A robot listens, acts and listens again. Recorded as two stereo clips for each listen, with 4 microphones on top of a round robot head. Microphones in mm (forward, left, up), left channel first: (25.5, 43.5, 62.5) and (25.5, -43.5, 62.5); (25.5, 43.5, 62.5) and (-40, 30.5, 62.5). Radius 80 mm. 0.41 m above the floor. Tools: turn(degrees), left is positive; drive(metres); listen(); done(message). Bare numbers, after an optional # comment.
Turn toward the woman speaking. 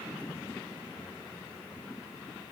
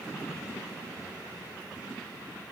listen()
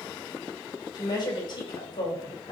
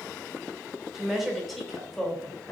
# The woman speaking: 85° left.
turn(85)
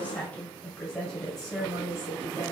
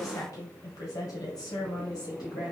done("Found it: a woman speaking, straight ahead.")